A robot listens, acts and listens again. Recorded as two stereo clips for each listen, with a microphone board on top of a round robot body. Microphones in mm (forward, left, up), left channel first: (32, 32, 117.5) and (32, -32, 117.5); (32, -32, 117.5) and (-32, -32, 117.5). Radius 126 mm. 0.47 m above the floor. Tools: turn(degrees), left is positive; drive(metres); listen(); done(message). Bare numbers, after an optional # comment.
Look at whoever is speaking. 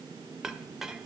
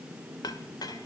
listen()
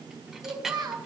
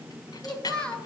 # The child speaking: 75° right.
turn(-75)
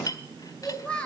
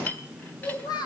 # The child speaking is now 15° left.
turn(15)
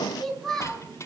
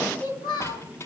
done("Found it: a child speaking, straight ahead, 2 to 4 m away.")